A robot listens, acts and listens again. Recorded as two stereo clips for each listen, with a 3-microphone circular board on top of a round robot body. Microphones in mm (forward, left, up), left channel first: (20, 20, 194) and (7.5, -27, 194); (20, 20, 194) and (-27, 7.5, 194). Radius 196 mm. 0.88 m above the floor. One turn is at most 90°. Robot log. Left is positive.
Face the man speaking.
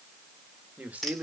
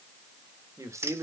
note: The man speaking: 170° right.
cmd yaw -90
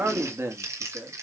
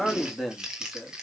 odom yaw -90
note: The man speaking is now 80° right.
cmd yaw -80
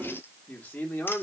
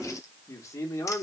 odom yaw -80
note: The man speaking is now 20° left.
cmd yaw +20
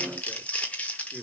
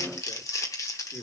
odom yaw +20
end: Found it: a man speaking, straight ahead.